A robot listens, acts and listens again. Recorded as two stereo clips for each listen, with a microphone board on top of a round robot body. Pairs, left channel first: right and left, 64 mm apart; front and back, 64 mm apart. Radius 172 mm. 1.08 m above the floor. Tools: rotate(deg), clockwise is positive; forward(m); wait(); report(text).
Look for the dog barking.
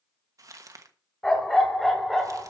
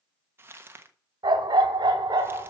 rotate(-180)
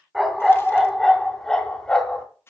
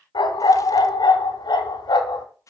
rotate(15)
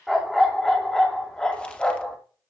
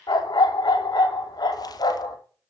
rotate(15)
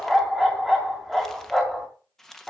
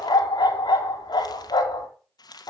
report("Found it: a dog barking, straight ahead, 2 to 4 m away.")